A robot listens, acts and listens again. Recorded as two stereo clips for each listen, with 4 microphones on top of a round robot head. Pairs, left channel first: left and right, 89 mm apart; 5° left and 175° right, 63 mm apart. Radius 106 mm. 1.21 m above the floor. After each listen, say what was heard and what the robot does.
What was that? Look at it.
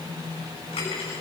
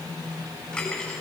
The cutlery clinking: 80° left. Turn 80° left.
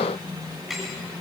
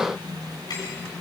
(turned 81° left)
Facing the cutlery clinking, over 4 m away.